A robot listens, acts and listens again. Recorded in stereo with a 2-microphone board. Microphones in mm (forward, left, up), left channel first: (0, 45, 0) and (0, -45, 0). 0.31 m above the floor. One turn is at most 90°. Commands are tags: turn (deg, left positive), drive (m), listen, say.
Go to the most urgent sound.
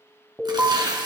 <turn deg="-30"/>
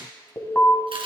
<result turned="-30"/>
<turn deg="20"/>
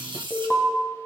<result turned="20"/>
<drive m="1.0"/>
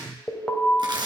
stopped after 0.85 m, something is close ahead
<turn deg="10"/>
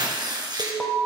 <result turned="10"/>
<say>Arrived at the alarm, straight ahead.</say>